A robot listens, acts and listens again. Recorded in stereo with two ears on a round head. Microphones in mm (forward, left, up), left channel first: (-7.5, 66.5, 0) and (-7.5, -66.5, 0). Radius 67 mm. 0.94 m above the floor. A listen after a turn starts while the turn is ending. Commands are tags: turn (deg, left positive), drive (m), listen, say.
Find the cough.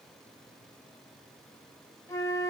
<listen/>
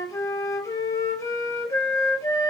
<listen/>
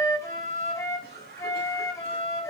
<turn deg="-70"/>
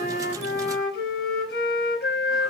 <listen/>
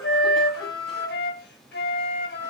<listen/>
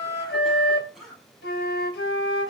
<say>Facing the cough.</say>